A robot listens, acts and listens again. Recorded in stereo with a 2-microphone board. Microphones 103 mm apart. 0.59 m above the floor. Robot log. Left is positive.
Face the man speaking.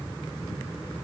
cmd idle
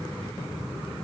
cmd idle
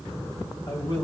note: The man speaking: about 45° left or 135° left.
cmd yaw +45
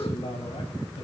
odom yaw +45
note: So it is at 75° left.
cmd yaw +75
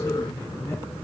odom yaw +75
cmd idle
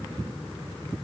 cmd idle
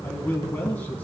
note: The man speaking is now 15° left.
cmd yaw +15
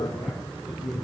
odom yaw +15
end: Facing the man speaking.